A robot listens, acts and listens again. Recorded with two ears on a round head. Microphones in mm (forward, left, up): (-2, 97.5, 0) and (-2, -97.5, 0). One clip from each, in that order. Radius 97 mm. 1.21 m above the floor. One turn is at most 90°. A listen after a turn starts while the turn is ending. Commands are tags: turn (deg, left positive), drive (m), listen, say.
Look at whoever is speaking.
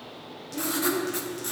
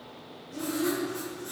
<turn deg="-55"/>
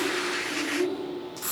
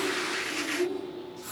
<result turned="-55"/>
<turn deg="-25"/>
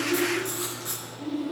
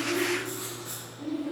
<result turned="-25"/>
<turn deg="-10"/>
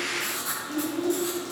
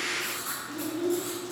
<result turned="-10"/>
<turn deg="-15"/>
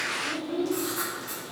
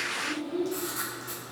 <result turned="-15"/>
<say>Found it: a child speaking, straight ahead.</say>